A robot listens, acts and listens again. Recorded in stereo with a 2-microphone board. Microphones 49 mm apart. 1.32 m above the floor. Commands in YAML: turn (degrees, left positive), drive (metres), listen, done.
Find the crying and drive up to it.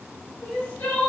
turn: 40
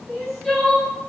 drive: 1.0
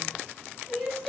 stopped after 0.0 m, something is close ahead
done: "Something is in my way. I am facing the crying but have not reached it."